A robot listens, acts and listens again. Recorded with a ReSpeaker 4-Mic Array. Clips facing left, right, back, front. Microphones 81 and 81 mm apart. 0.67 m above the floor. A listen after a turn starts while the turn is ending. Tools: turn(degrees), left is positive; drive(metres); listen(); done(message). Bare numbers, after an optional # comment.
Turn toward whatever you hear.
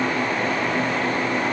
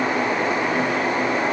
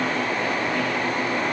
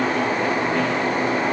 listen()
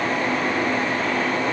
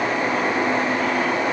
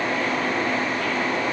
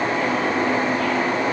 listen()
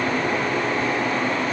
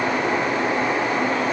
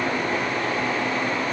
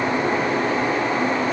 done("I can't make out anything to turn to.")